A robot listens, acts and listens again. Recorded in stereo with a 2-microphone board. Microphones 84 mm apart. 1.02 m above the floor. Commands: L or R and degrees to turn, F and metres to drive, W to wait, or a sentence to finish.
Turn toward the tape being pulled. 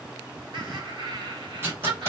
R30
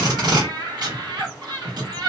R120
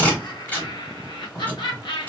L20
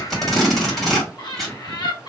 Facing the tape being pulled, 1 to 2 m away.